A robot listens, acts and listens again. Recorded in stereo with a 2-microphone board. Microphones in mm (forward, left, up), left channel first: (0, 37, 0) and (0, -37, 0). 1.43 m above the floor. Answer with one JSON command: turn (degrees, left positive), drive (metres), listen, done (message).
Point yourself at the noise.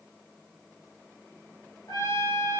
{"turn": 70}
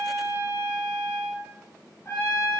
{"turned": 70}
{"turn": 35}
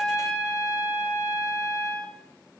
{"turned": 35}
{"turn": 20}
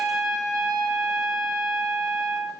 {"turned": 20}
{"done": "Found it: a trumpet, straight ahead, over 4 m away."}